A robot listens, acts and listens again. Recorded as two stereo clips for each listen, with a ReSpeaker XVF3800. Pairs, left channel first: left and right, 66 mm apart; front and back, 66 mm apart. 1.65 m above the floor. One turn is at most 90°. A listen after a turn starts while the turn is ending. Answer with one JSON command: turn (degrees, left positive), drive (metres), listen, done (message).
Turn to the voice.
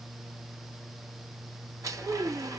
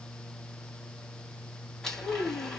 {"turn": -25}
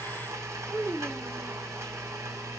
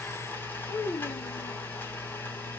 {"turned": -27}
{"done": "Found it: a child speaking, straight ahead."}